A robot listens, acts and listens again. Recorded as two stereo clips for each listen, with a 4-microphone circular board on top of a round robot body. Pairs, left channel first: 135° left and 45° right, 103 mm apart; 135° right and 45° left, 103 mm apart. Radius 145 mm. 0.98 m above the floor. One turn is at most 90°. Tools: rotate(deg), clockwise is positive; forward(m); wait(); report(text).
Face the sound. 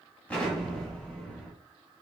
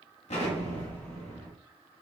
rotate(90)
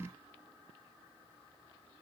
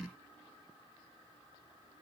rotate(55)
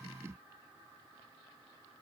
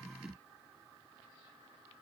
report("Facing where the explosion came from. I can't hear it now.")